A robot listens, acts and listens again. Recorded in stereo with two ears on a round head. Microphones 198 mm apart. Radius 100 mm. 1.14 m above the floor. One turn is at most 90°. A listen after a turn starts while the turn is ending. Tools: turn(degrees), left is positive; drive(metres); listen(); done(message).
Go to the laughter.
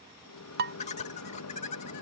turn(degrees=30)
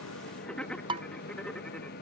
drive(metres=1.0)
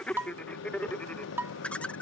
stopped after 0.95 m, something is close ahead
done("I am next to the laughter.")